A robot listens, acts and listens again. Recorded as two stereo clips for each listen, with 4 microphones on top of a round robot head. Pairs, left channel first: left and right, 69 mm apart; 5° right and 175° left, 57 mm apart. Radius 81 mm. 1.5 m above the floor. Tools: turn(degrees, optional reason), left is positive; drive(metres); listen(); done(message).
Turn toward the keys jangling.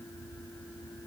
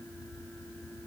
listen()
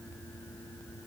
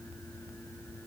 listen()
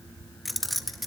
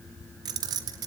turn(degrees=180, reason="The keys jangling: straight behind.")
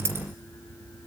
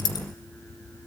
turn(degrees=-25, reason="The keys jangling is now 25° right.")
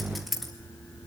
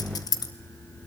done("Found it: keys jangling, straight ahead.")